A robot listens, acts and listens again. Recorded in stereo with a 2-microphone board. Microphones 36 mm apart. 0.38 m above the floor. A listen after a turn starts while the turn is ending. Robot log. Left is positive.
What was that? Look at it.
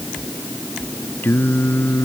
note: The singing: about 70° left or 110° left.
cmd yaw +70
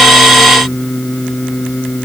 note: So it is at 20° left.
cmd yaw +20
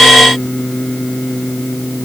note: The singing is now 15° left.
cmd yaw +15
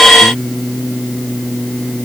end: Facing the singing.